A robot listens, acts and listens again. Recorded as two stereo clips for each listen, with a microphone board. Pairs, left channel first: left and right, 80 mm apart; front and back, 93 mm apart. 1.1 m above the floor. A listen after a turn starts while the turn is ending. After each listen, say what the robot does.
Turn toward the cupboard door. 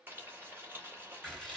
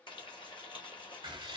Keep listening.
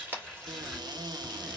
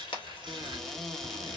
Turn 85° right.
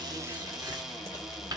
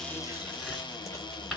Facing the cupboard door, under 1 m away.